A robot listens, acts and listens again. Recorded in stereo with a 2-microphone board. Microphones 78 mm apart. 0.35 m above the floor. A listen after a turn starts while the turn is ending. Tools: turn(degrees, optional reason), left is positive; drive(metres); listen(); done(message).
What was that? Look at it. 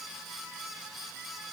listen()
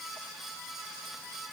listen()
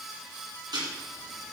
turn(degrees=-70, reason="The ticking: about 70° right or 110° right.")
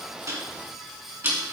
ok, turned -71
turn(degrees=-30, reason="So it is at 30° right.")
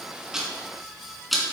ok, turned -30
done("Facing the ticking.")